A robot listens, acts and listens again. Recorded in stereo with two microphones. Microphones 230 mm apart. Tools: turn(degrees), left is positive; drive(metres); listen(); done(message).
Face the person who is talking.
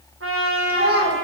turn(degrees=-50)
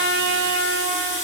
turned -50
listen()
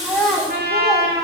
done("Facing the child speaking.")